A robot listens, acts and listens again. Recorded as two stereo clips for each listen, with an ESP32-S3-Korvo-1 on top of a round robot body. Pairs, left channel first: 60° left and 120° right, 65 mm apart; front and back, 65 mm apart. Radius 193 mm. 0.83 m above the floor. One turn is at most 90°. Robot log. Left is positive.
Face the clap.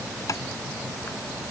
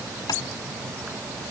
cmd idle
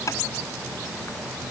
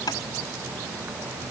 cmd idle
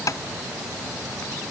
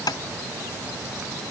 end: I can't make out a clap to turn to.